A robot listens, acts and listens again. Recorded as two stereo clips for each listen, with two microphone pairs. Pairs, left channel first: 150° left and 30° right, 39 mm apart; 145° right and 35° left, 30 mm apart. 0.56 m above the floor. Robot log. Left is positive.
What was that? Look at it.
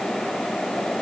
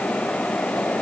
cmd idle
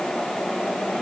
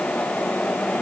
cmd idle
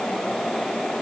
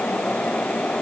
end: I can't make out anything to turn to.